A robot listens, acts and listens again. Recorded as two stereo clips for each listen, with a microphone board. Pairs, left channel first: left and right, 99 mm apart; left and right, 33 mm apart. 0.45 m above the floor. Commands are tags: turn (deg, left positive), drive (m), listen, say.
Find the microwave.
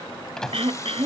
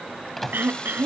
<turn deg="30"/>
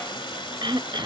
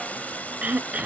<listen/>
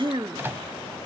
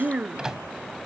<turn deg="-25"/>
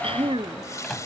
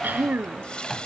<say>Facing the microwave.</say>